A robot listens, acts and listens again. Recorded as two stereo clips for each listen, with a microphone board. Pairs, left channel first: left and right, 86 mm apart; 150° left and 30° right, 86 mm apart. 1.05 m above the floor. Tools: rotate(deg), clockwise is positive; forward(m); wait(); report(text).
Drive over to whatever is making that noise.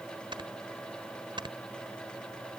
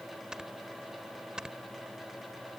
rotate(110)
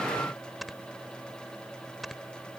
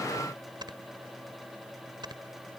forward(1.0)
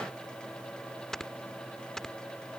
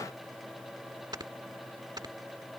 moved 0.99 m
forward(1.0)
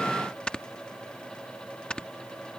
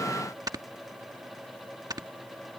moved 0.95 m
rotate(-10)
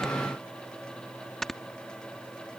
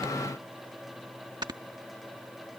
forward(1.0)
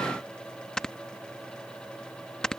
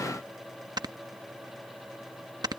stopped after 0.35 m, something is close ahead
rotate(-10)
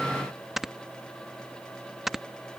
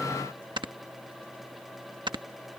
report("I am next to the snoring.")